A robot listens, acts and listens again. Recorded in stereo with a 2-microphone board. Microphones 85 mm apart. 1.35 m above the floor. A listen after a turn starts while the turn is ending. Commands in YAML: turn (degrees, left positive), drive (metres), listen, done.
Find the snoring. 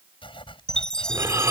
turn: -30
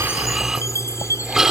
done: "Found it: snoring, straight ahead."